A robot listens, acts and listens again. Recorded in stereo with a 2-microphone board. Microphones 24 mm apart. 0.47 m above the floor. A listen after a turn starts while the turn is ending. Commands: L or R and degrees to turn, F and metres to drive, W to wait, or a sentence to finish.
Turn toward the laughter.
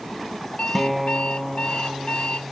W
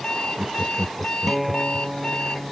R30
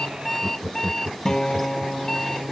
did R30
R140
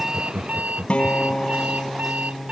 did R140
R45
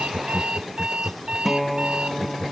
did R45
L10
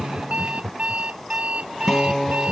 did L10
Facing the laughter.